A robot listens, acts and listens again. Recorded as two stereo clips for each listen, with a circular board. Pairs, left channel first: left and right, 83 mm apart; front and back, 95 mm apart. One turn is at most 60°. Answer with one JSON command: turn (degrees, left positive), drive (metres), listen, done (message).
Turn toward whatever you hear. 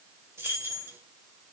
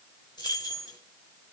{"turn": -35}
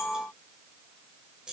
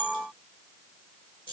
{"turn": -10}
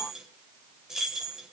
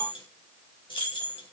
{"done": "Facing the keys jangling, 2 to 4 m away."}